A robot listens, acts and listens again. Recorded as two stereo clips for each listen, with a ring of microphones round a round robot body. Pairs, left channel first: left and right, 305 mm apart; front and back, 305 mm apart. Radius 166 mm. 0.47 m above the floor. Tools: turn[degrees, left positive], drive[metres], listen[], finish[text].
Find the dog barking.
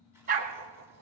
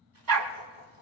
Thought: The dog barking: 155° right.
Action: turn[-155]
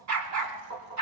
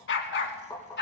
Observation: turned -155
Thought: The dog barking is now 55° right.
Action: turn[-55]
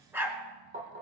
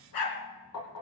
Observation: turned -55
Action: finish[Facing the dog barking, 2 to 4 m away.]